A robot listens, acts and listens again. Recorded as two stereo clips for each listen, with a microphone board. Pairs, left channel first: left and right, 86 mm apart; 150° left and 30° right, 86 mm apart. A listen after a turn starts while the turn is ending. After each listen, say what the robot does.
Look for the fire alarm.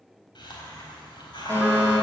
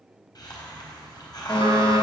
Turn 145° left.
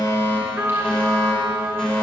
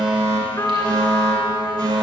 Found it: a fire alarm, straight ahead.